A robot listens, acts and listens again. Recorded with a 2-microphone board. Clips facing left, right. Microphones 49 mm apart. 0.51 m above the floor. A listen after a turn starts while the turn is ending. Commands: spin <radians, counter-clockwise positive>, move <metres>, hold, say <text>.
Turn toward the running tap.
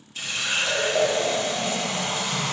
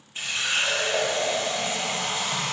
spin -0.44
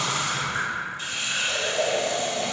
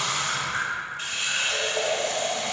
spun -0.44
spin -2.18
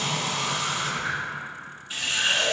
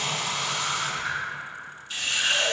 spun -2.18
spin 0.26
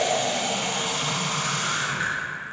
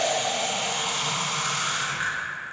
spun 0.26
say Found it: a running tap, straight ahead, 1 to 2 m away.